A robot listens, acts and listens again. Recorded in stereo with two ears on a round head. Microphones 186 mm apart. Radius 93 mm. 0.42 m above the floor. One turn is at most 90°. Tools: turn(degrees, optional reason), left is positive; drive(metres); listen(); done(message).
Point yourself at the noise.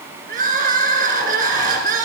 turn(degrees=-45, reason="The crying: about 45° right or 135° right.")
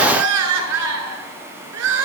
turn(degrees=-90, reason="So it is at 90° right.")
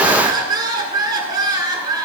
turn(degrees=-20, reason="The crying is now 20° right.")
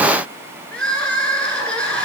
done("Found it: crying, straight ahead, 1 to 2 m away.")